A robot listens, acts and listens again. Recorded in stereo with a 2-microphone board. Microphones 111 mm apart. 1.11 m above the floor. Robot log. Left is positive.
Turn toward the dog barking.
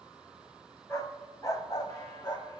note: The dog barking: about 45° left or 135° left.
cmd yaw +45
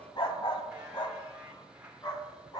note: So it is at 35° left.
cmd yaw +35
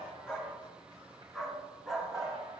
end: Facing the dog barking, 2 to 4 m away.